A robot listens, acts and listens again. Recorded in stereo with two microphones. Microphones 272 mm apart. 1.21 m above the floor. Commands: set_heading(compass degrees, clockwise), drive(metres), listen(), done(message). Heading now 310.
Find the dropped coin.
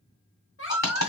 set_heading(245)
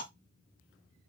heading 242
listen()
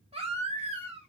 done("I heard a dropped coin, but can't make it out now. It was about straight ahead or 45° left.")